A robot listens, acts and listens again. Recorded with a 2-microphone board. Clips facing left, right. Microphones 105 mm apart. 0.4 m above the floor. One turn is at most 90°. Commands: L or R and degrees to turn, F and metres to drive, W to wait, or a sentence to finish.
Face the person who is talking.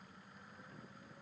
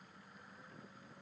W
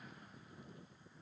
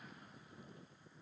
W
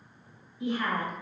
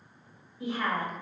R40
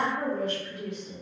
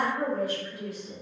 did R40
R10
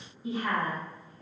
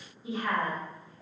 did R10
Found it: a woman speaking, straight ahead.